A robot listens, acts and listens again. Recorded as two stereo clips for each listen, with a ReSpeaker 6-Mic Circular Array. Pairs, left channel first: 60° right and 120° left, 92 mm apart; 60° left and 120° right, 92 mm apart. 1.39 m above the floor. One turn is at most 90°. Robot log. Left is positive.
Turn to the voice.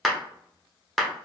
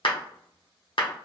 cmd idle
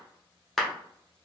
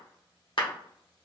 cmd idle
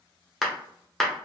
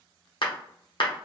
end: I can't make out anyone speaking, only a clap.